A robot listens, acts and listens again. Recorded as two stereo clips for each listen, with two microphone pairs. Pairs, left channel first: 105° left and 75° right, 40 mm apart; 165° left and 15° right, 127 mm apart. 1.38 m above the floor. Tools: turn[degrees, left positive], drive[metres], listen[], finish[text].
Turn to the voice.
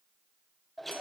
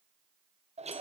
Action: listen[]
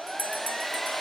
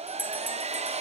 Action: listen[]
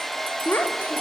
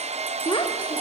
Thought: The child speaking: 110° left.
Action: turn[110]
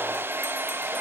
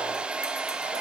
Action: listen[]
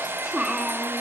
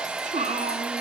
Action: finish[Facing the child speaking.]